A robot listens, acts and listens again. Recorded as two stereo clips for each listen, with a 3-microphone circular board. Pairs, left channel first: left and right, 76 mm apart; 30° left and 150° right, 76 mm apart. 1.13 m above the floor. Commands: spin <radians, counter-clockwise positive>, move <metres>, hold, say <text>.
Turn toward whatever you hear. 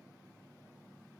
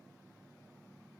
hold
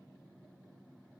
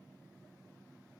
hold
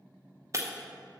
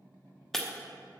spin -0.96
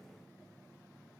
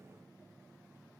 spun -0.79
spin -0.17
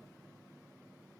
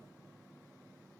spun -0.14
say Facing where the breaking glass came from. I can't hear it now.